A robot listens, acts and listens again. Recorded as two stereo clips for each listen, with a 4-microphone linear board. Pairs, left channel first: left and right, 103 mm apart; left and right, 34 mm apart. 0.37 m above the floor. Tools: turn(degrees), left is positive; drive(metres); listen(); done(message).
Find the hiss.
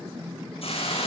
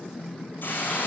turn(degrees=70)
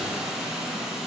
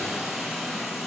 done("Found it: a hiss, straight ahead.")